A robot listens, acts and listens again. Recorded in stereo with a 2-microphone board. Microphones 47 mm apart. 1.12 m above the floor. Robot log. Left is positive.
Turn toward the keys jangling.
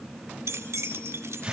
cmd yaw -90
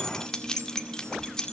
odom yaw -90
note: So it is at 15° left.
cmd yaw +15
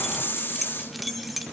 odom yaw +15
end: Facing the keys jangling.